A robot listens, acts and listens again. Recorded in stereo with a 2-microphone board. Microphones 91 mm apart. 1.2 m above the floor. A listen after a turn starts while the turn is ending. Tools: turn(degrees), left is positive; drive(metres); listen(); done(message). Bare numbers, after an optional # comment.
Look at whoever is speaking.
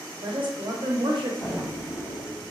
# The woman speaking: about 65° right or 115° right.
turn(-65)
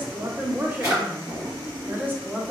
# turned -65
# So it is at 25° right.
turn(-25)
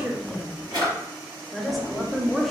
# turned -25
done("Found it: a woman speaking, straight ahead, under 1 m away.")